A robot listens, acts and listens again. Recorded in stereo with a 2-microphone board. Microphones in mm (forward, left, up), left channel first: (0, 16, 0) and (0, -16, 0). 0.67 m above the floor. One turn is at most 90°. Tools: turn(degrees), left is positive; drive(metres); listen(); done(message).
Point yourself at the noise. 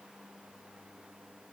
listen()
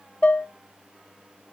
turn(degrees=45)
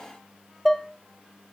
done("Facing the dishes clattering.")